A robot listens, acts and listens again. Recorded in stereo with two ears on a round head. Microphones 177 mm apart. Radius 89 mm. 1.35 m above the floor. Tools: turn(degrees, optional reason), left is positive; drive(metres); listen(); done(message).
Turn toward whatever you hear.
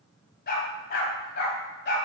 turn(degrees=50, reason="The dog barking: about 50° left or 130° left.")
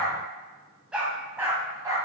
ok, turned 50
turn(degrees=-15, reason="So it is at 15° right.")
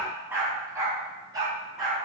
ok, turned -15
turn(degrees=-20, reason="The dog barking is now 20° right.")
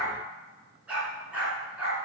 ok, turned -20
done("Facing the dog barking.")